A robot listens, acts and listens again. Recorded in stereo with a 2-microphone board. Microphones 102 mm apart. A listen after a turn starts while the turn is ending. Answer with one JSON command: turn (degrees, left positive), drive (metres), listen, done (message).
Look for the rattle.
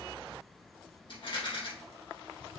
{"turn": 60}
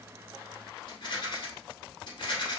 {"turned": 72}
{"turn": 50}
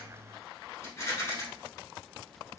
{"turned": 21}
{"turn": 30}
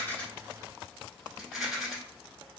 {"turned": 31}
{"done": "Facing the rattle, 1 to 2 m away."}